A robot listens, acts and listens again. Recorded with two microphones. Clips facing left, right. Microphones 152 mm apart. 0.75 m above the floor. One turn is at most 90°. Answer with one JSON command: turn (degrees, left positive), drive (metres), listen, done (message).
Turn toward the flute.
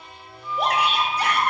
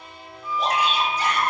{"turn": -90}
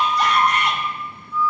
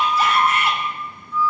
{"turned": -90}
{"turn": 10}
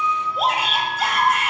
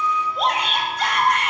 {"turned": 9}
{"done": "Facing the flute."}